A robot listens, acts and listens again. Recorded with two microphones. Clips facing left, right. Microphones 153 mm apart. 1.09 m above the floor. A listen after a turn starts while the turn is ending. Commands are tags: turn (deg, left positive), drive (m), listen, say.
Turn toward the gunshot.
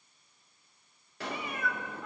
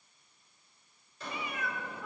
<turn deg="65"/>
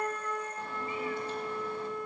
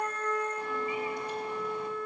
<listen/>
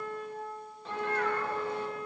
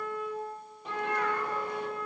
<say>I heard a gunshot, but can't make it out now. It was about straight ahead or 50° left.</say>